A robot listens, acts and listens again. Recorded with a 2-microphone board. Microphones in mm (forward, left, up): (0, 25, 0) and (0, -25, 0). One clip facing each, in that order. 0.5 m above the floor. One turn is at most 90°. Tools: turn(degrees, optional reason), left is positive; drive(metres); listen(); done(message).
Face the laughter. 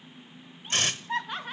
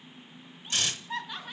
turn(degrees=40, reason="The laughter: about 40° left or 140° left.")
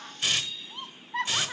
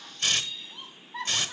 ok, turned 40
turn(degrees=90, reason="So it is at 90° left.")
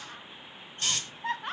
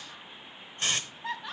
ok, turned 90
turn(degrees=55, reason="The laughter is now 55° left.")
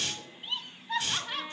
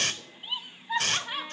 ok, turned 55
turn(degrees=-15, reason="The laughter is now 15° right.")
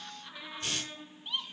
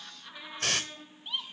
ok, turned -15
done("Facing the laughter.")